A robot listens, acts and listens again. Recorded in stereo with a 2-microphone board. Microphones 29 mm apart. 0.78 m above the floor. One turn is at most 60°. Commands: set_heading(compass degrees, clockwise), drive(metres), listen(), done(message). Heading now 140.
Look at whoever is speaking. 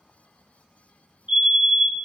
listen()
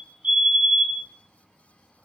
listen()
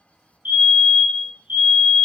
done("I can't make out anyone speaking to turn to.")